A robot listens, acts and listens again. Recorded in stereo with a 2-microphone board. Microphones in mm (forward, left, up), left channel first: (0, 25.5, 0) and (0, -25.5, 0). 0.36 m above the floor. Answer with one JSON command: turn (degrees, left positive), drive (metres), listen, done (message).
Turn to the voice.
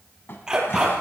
{"listen": true}
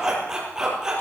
{"listen": true}
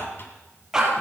{"done": "I can't make out anyone speaking to turn to."}